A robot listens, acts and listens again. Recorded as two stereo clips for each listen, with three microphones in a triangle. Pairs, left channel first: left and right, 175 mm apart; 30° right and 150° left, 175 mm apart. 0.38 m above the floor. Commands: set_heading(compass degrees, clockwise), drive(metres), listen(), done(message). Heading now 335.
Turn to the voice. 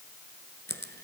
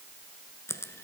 listen()
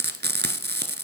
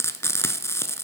listen()
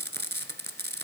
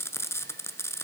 done("I can't make out anyone speaking, only frying.")